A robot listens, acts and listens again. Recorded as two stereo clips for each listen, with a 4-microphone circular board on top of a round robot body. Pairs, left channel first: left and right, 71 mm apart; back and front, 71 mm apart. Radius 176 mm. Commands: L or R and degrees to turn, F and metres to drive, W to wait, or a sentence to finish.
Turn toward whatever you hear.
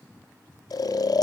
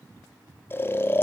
L120
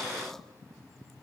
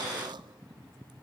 W
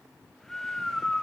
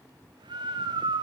Facing the snoring, 1 to 2 m away.